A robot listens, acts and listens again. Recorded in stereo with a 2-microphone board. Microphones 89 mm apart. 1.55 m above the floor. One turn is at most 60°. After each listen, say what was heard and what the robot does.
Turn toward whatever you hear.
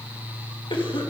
The cough: about 65° left or 115° left. Turn 60° left.
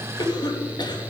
So it is at 55° left. Turn 55° left.
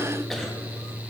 Keep listening.
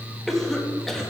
Found it: a cough, straight ahead, 2 to 4 m away.